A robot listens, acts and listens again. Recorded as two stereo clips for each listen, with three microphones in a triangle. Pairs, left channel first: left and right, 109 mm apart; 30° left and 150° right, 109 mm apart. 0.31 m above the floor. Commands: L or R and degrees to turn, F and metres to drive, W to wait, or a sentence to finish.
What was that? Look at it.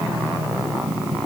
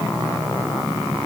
W
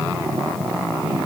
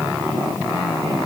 W
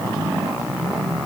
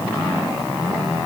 I can't make out anything to turn to.